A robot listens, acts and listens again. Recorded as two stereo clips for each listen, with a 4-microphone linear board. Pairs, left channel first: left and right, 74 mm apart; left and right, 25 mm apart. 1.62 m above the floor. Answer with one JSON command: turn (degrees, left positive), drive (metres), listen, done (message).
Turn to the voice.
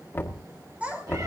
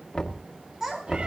{"turn": -15}
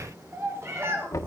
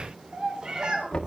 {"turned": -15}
{"turn": -35}
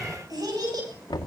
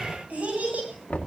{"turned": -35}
{"turn": -110}
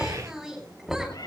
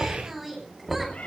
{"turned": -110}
{"done": "Facing the child speaking, over 4 m away."}